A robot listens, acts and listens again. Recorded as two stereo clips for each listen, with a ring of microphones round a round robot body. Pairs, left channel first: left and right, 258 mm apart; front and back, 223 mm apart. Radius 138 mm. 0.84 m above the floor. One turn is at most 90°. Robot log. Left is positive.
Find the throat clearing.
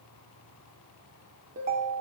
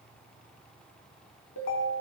cmd idle
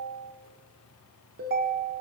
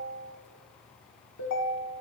cmd idle
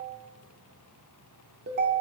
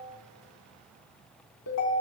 end: I can't make out throat clearing, only a ringtone.